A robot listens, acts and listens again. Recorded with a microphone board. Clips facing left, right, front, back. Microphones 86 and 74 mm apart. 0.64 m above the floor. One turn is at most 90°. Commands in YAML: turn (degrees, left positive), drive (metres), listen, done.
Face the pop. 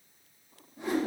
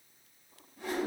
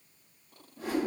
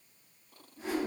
listen: true
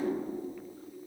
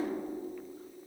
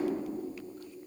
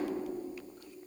listen: true
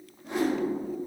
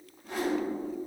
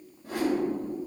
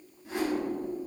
done: "I can't make out a pop, only a whoosh."